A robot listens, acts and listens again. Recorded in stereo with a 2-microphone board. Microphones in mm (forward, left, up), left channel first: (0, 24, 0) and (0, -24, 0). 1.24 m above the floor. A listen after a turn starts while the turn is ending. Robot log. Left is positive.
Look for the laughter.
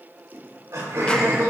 cmd yaw -90
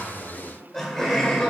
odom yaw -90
note: So it is at 10° left.
cmd yaw +10
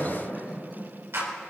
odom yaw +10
end: Facing the laughter.